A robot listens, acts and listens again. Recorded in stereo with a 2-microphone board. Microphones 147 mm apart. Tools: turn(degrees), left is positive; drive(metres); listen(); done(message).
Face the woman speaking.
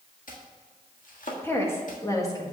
turn(degrees=25)
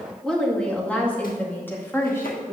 turn(degrees=20)
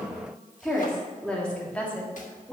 turn(degrees=30)
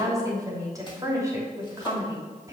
turn(degrees=-25)
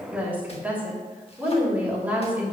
turn(degrees=-10)
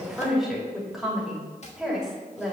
done("Facing the woman speaking, 2 to 4 m away.")